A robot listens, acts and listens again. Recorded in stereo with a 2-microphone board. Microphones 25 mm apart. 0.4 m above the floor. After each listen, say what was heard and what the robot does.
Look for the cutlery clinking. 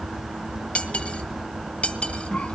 The cutlery clinking: about 70° left or 110° left. Turn 70° left.
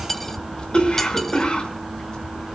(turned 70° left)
So it is at 15° left. Turn 15° left.
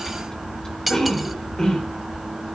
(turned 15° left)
Found it: cutlery clinking, straight ahead, 1 to 2 m away.